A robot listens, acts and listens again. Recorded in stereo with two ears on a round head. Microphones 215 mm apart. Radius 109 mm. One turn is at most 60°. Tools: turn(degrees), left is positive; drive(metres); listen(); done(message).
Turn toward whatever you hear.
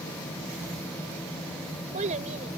turn(degrees=-30)
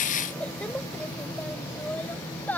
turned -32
done("Facing the child speaking.")